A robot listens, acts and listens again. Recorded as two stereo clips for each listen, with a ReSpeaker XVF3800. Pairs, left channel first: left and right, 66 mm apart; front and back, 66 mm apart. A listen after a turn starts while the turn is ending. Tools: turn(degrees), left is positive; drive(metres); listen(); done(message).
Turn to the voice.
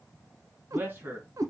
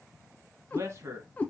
turn(degrees=-145)
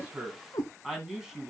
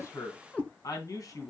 turn(degrees=-10)
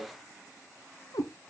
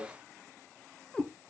listen()
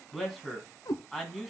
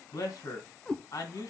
done("Facing the man speaking.")